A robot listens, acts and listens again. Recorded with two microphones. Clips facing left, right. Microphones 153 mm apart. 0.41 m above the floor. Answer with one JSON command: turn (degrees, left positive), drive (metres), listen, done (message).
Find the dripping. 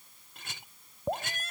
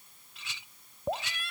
{"turn": 30}
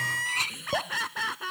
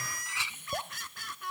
{"listen": true}
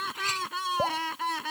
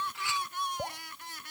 {"listen": true}
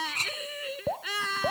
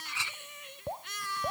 {"turn": 150}
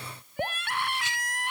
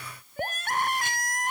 {"done": "Found it: dripping, straight ahead."}